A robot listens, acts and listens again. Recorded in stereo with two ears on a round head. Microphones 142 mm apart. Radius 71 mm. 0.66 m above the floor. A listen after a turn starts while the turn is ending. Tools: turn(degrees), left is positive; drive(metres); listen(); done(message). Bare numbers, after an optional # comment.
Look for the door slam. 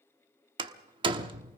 # The door slam: about 35° right or 145° right.
turn(-35)
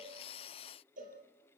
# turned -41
listen()
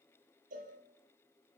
done("I heard a door slam, but can't make it out now. It was about 10° left or 105° right.")